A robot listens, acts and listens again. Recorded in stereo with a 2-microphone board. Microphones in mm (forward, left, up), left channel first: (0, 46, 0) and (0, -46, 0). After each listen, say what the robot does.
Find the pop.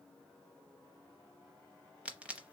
Turn 30° right.
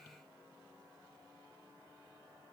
Keep listening.
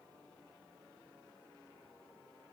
I heard a pop, but can't make it out now. It was about 20° left or 140° right.